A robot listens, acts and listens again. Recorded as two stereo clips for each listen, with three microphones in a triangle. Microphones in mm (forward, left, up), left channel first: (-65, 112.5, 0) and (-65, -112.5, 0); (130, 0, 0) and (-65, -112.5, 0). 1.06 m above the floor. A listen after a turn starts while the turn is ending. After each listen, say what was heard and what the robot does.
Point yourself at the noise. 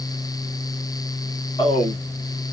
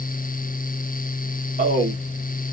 The man speaking: 160° left. Turn 160° left.
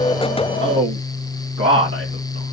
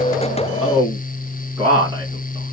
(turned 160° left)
The man speaking is now 75° right. Turn 75° right.
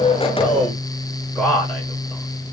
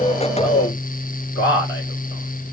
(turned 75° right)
Facing the man speaking.